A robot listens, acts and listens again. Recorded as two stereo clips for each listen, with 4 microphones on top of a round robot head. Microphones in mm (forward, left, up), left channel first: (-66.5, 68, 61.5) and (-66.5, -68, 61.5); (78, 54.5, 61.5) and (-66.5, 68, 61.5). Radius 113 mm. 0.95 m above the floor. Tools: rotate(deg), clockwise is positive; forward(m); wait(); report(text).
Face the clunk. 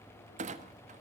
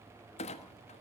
rotate(55)
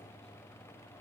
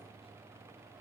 report("I heard a clunk from this way, but can't make it out now.")